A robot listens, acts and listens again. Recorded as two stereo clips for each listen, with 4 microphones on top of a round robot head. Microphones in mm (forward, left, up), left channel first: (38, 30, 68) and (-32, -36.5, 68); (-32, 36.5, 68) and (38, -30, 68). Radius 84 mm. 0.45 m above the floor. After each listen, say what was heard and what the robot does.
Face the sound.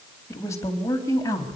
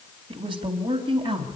The woman speaking: 10° right. Turn 10° right.
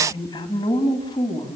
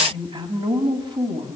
Facing the woman speaking, over 4 m away.